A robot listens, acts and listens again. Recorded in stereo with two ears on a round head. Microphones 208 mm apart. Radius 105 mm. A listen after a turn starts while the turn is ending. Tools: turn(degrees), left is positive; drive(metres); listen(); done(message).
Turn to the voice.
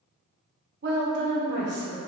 turn(degrees=-50)
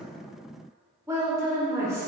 turn(degrees=-15)
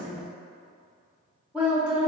done("Found it: a woman speaking, straight ahead.")